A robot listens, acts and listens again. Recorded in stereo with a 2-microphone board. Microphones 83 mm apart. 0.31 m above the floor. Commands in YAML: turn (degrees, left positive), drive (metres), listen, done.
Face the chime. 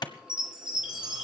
turn: -30
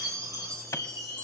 turn: -140
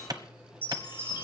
turn: -25
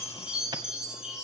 turn: -10
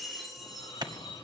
done: "Facing the chime, over 4 m away."